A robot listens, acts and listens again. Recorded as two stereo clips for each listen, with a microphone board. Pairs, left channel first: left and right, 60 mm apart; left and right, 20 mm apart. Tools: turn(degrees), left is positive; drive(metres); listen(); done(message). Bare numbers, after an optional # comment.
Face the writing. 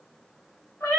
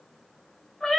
listen()
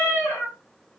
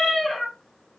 listen()
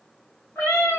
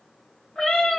done("I can't make out writing, only a cat meowing.")